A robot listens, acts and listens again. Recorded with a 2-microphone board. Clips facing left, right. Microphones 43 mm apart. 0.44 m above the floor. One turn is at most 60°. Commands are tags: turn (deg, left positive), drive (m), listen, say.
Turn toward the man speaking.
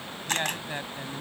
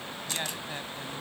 <turn deg="20"/>
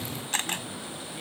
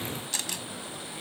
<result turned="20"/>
<listen/>
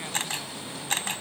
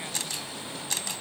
<listen/>
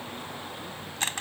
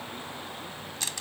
<say>I heard a man speaking, but can't make it out now. It was about straight ahead or 140° left.</say>